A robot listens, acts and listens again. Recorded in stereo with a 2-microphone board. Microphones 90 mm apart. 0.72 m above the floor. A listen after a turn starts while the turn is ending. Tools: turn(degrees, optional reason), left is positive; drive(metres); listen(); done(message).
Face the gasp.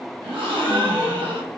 turn(degrees=-70, reason="The gasp: about 70° right or 110° right.")
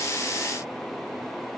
listen()
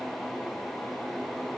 done("I heard a gasp, but can't make it out now. It was about straight ahead or 40° right.")